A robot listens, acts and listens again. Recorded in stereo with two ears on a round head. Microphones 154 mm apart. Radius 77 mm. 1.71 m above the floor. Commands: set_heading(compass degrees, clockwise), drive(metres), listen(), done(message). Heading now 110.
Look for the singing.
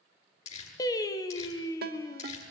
set_heading(90)
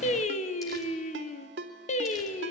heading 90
set_heading(310)
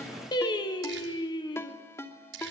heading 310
set_heading(285)
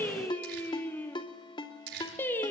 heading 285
set_heading(275)
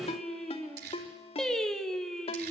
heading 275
done("Facing the singing, 1 to 2 m away.")